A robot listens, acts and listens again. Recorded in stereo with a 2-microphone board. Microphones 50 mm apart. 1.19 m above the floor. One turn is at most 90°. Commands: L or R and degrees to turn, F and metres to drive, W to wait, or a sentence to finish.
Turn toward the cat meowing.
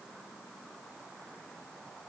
W
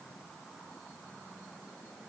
W
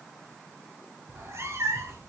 R70
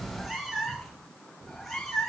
Facing the cat meowing, 2 to 4 m away.